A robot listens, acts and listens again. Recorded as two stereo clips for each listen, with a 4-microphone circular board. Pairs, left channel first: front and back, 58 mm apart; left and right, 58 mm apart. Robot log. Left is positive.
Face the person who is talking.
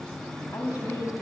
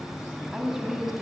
note: The woman speaking: 10° right.
cmd yaw -10
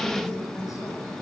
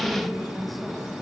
end: Found it: a woman speaking, straight ahead, over 4 m away.